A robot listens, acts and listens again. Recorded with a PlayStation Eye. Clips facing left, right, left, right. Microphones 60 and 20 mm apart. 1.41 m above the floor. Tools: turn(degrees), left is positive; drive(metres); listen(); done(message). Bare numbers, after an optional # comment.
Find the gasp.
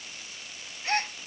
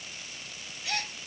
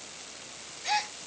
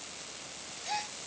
# The gasp: about 40° left or 140° left.
turn(40)
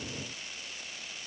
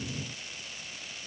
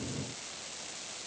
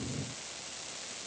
listen()
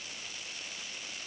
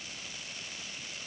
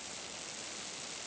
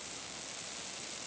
done("I heard a gasp, but can't make it out now. It was about straight ahead or 100° left.")